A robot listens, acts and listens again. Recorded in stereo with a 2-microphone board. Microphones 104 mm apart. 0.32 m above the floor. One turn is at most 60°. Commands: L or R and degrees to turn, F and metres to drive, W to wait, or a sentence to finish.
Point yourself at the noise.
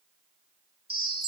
R60
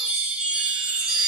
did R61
Facing the chime.